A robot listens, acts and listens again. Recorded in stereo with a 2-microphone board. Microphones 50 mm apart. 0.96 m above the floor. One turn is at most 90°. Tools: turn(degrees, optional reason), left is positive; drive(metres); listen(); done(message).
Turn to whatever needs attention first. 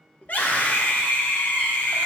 turn(degrees=35, reason="The scream: about 35° left or 145° left.")
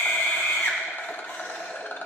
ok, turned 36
turn(degrees=90, reason="So it is at 105° left.")
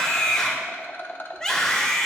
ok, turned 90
turn(degrees=15, reason="The scream is now 15° left.")
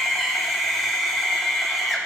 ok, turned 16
done("Facing the scream, 1 to 2 m away.")